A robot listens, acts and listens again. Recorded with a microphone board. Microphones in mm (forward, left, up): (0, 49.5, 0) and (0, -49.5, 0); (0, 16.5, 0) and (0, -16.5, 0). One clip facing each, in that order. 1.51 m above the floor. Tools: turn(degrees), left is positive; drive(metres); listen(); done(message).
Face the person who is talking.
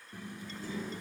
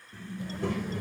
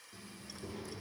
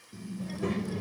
turn(degrees=-70)
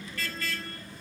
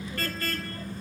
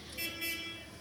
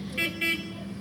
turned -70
turn(degrees=-40)
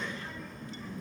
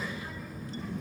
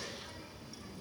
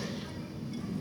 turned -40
done("Facing the child speaking.")